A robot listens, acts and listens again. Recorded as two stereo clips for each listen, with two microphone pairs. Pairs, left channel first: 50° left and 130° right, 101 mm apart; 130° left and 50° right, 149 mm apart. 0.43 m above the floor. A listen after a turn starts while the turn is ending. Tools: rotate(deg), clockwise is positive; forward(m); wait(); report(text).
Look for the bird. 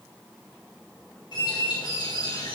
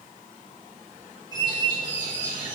rotate(-10)
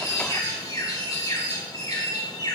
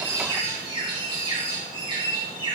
report("Found it: a bird, straight ahead.")